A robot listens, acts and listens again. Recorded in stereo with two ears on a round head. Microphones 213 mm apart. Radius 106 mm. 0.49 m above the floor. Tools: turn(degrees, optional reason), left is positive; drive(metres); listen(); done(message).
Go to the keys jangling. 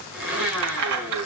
turn(degrees=-65, reason="The keys jangling: about 65° right or 115° right.")
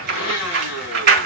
turn(degrees=-45, reason="So it is at 45° right.")
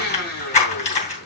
turn(degrees=30, reason="The keys jangling is now 30° left.")
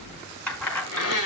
drive(metres=1.0)
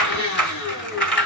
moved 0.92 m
drive(metres=1.0)
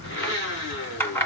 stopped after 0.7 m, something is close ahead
turn(degrees=10, reason="The keys jangling is now 10° left.")
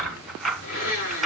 done("I am next to the keys jangling.")